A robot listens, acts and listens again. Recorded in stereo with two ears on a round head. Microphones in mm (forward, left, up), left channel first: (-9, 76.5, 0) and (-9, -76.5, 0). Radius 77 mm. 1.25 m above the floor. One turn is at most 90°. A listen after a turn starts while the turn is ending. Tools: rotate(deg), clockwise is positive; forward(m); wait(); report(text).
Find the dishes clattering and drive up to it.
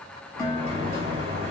rotate(-20)
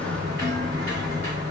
wait()
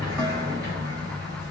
wait()
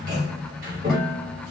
report("I heard dishes clattering, but can't make it out now. It was about straight ahead or 140° left. I did not reach it.")